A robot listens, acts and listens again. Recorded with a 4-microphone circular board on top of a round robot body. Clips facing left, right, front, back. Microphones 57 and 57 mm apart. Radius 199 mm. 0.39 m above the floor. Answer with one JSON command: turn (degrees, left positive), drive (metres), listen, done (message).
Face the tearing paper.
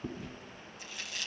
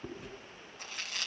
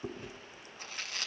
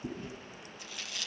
{"turn": -50}
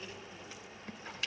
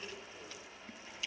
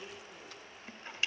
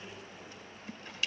{"listen": true}
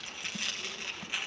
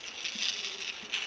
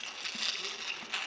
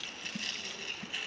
{"turn": 15}
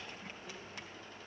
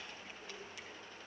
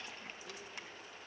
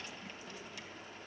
{"listen": true}
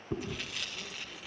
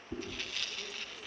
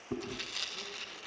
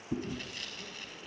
{"done": "Facing the tearing paper."}